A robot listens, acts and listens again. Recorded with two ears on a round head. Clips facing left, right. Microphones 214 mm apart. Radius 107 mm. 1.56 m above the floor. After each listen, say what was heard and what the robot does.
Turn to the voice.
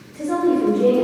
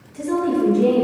The woman speaking: about 45° right or 135° right. Turn 45° right.
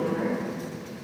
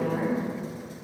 So it is at 90° right. Turn 90° right.
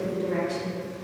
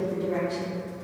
The woman speaking is now 20° left. Turn 20° left.
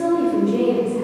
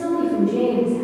Found it: a woman speaking, straight ahead.